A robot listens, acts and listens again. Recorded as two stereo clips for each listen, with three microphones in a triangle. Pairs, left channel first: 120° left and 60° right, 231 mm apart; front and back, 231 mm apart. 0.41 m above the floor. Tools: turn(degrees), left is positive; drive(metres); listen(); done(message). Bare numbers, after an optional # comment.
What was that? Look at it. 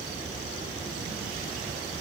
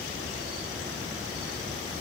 listen()
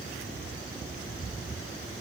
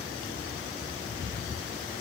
listen()
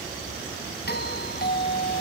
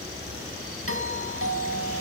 # The doorbell: 165° left.
turn(165)
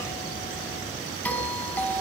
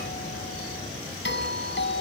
# The doorbell is now 35° left.
turn(35)
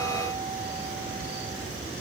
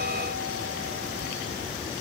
listen()
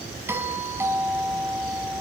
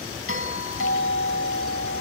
# The doorbell is now 20° left.
turn(20)
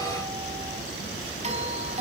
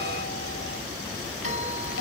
done("Facing the doorbell.")